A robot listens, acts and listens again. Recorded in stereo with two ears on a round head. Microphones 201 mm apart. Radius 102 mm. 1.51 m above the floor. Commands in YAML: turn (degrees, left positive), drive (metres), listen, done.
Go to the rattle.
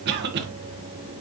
listen: true
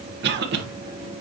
listen: true
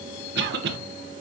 done: "I can't make out a rattle, only a cough."